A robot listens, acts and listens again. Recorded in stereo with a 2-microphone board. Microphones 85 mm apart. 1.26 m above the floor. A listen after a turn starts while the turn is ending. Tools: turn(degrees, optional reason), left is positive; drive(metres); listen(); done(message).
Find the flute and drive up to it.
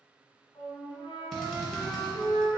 turn(degrees=60, reason="The flute: about 60° left or 120° left.")
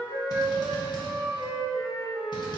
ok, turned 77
turn(degrees=15, reason="So it is at 15° left.")
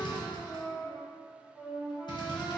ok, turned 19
drive(metres=1.0)
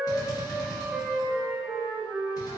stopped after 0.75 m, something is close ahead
turn(degrees=-10, reason="The flute is now 10° right.")
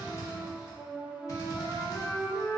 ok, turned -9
done("I am next to the flute.")